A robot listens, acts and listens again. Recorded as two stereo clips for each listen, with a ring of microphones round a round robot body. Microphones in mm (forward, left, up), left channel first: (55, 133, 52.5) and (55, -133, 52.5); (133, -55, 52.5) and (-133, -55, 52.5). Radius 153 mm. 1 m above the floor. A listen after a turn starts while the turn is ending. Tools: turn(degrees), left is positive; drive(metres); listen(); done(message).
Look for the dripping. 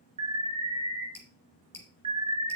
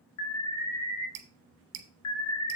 turn(degrees=175)
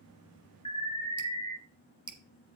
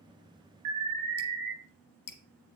done("Found it: dripping, straight ahead, 1 to 2 m away.")